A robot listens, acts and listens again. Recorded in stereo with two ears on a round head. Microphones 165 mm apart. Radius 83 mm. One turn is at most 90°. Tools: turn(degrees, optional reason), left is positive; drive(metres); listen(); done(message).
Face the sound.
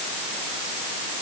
listen()
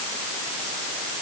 listen()
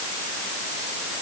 done("I can't make out anything to turn to.")